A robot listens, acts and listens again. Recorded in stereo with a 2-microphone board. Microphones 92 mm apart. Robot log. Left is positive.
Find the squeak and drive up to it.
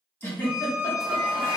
note: The squeak: about 15° right or 165° right.
cmd yaw -15
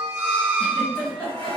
note: So it is at 145° right.
cmd yaw -145
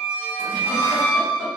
note: The squeak is now 10° right.
cmd yaw -10
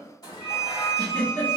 cmd fwd 1.0
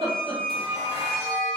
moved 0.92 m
cmd fwd 1.0
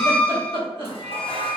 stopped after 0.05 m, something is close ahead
end: I am next to the squeak.